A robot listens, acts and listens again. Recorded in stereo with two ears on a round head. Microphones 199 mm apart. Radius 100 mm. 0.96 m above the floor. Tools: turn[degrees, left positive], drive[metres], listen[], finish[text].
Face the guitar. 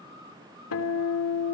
Action: turn[90]
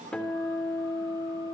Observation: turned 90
Action: finish[Found it: a guitar, straight ahead, 2 to 4 m away.]